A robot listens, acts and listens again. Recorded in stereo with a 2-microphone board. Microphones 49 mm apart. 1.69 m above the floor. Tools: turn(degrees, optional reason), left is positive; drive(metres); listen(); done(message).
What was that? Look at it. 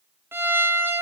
turn(degrees=-50, reason="The violin: about 50° right or 130° right.")
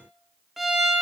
done("Facing the violin.")